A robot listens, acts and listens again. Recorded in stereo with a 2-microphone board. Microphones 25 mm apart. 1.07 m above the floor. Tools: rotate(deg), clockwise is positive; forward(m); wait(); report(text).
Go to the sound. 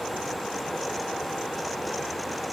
wait()
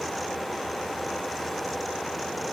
wait()
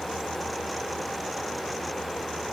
report("I can't make out anything to turn to.")